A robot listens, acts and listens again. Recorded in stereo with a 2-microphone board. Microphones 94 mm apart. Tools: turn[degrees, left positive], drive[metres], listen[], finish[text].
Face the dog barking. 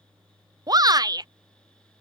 Action: listen[]
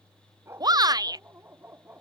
Thought: The dog barking: about 20° right or 160° right.
Action: turn[-20]
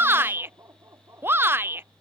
Thought: The dog barking: about 30° right or 150° right.
Action: turn[-30]
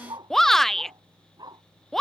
Thought: So it is at 130° right.
Action: turn[-130]
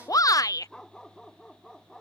Action: finish[Found it: a dog barking, straight ahead.]